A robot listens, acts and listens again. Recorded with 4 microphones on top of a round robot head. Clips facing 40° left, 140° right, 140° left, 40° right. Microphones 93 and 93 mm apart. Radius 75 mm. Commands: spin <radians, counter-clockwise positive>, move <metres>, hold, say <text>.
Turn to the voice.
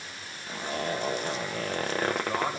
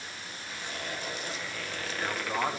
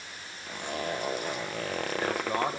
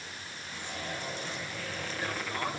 spin 2.36
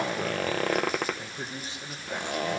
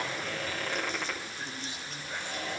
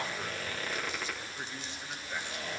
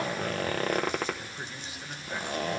spin 0.70
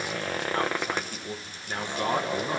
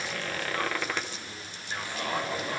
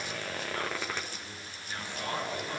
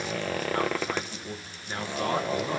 spin 0.17
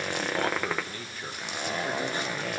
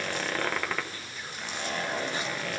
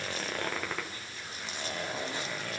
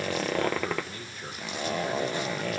hold
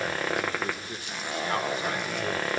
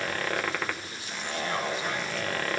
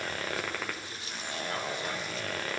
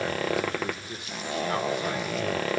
hold
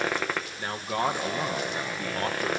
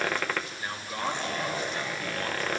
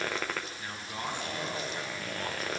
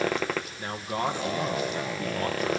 say Found it: a man speaking, straight ahead, 2 to 4 m away.